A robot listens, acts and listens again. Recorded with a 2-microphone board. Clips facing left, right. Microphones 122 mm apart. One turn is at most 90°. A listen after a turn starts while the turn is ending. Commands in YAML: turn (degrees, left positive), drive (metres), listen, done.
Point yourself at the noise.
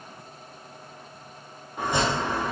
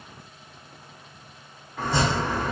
turn: 20
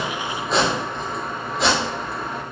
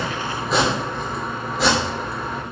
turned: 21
done: "Found it: chopping, straight ahead, 2 to 4 m away."